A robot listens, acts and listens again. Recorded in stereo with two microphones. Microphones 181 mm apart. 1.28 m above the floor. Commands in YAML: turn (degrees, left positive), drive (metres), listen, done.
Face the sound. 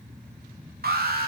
turn: -60
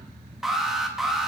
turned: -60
done: "Found it: an alarm, straight ahead, 2 to 4 m away."